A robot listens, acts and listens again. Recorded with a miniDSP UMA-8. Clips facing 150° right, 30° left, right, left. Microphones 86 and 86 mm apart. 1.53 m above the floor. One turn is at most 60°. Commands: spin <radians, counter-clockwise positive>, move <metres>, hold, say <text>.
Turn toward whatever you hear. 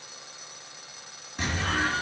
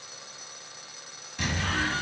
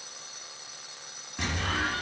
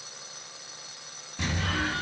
spin -1.05
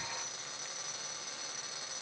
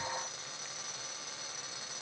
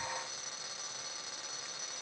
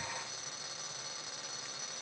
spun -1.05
spin -0.61
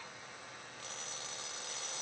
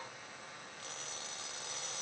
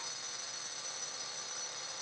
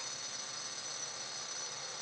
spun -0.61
say I heard an explosion from this way, but can't make it out now.